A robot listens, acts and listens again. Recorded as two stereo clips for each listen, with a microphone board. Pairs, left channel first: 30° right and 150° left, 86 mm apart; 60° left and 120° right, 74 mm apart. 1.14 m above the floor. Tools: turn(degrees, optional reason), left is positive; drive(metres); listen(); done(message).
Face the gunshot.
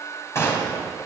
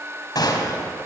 turn(degrees=30, reason="The gunshot: 30° left.")
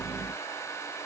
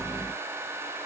done("Facing where the gunshot came from. I can't hear it now.")